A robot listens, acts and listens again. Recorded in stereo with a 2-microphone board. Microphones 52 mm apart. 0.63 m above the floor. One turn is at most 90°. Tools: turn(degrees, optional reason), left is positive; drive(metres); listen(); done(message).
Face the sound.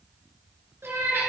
turn(degrees=-50, reason="The cat meowing: about 50° right or 130° right.")
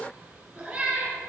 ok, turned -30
turn(degrees=-20, reason="So it is at 20° right.")
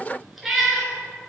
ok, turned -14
done("Facing the cat meowing, 2 to 4 m away.")